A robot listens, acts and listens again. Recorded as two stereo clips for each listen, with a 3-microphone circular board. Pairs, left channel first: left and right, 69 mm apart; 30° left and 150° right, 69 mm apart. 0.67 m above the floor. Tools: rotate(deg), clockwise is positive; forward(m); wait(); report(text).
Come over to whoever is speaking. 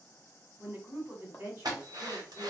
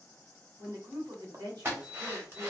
rotate(145)
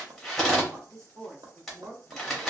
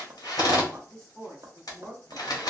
rotate(50)
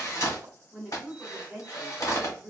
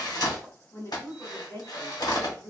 forward(1.0)
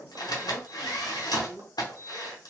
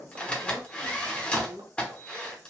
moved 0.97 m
rotate(10)
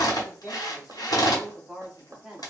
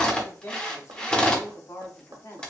forward(1.0)
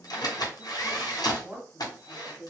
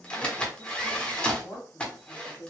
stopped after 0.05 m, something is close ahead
rotate(15)
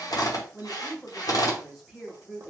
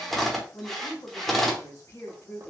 report("I am next to the woman speaking.")